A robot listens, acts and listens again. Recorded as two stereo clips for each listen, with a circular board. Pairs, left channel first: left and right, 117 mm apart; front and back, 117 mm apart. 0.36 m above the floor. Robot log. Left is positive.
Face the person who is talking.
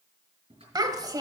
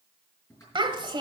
note: The child speaking: 140° right.
cmd yaw -140
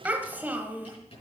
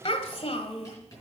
note: The child speaking is now 15° right.
cmd yaw -15
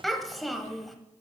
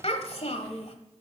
end: Facing the child speaking, 1 to 2 m away.